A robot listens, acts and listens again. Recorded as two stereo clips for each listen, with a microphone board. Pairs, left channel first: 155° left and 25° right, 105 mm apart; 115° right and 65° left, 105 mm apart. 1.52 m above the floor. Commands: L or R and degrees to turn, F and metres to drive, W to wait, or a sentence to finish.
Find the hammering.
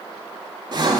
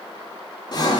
W
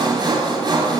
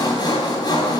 W
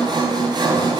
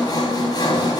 I can't make out hammering to turn to.